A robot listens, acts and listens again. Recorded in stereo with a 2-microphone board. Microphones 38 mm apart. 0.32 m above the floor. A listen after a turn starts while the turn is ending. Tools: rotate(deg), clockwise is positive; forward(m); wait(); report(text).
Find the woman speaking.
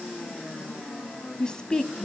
rotate(-30)
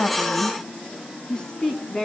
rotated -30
rotate(-30)
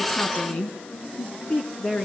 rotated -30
rotate(-150)
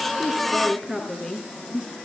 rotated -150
rotate(25)
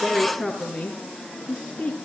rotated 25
report("Found it: a woman speaking, straight ahead, 2 to 4 m away.")